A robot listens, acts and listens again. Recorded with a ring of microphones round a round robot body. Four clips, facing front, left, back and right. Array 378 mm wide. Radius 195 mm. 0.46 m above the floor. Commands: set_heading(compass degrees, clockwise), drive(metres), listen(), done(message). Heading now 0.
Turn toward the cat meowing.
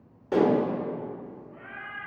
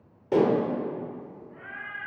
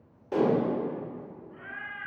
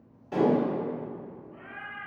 set_heading(225)
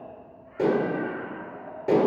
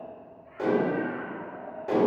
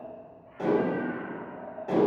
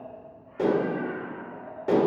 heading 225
set_heading(165)
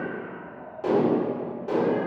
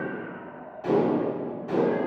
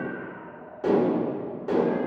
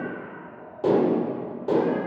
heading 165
done("Found it: a cat meowing, straight ahead.")